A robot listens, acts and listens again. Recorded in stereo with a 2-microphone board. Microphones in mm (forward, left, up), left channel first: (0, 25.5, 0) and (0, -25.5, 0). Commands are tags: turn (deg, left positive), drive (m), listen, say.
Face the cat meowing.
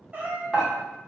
<turn deg="-35"/>
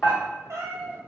<turn deg="-110"/>
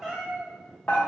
<say>Facing the cat meowing, under 1 m away.</say>